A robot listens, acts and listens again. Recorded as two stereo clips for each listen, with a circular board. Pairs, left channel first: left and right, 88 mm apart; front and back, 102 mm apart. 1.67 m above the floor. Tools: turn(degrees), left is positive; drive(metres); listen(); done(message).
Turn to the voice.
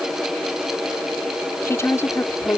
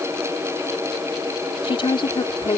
turn(degrees=35)
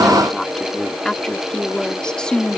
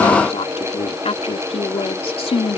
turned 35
turn(degrees=10)
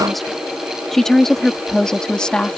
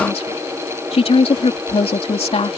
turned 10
turn(degrees=10)
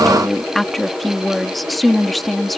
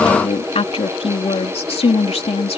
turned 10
done("Found it: a woman speaking, straight ahead.")